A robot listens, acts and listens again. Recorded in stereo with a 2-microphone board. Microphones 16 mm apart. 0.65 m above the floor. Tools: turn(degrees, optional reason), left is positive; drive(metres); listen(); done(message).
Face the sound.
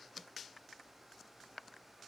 listen()
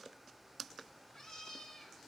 turn(degrees=35, reason="The cat meowing: about 35° left or 145° left.")
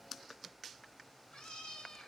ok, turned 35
turn(degrees=110, reason="So it is at 110° left.")
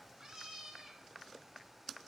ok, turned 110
turn(degrees=-45, reason="The cat meowing is now 45° right.")
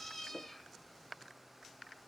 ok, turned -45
turn(degrees=20, reason="The cat meowing is now 20° left.")
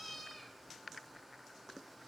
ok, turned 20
done("Found it: a cat meowing, straight ahead, 1 to 2 m away.")